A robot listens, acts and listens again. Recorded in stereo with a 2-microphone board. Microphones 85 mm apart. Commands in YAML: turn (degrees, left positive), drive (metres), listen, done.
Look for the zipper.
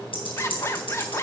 turn: 30
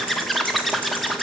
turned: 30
done: "Found it: a zipper, straight ahead."